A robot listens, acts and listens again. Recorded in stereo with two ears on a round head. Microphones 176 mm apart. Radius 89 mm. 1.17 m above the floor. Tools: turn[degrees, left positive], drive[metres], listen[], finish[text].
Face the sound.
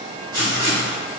Thought: The writing: about 20° right or 160° right.
Action: turn[-20]
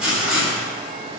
Action: finish[Found it: writing, straight ahead, 1 to 2 m away.]